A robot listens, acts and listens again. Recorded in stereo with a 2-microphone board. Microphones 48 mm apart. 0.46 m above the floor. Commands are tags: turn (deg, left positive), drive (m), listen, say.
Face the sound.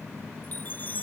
<turn deg="35"/>
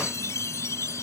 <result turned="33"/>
<turn deg="110"/>
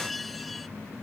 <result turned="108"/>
<say>Facing the chime.</say>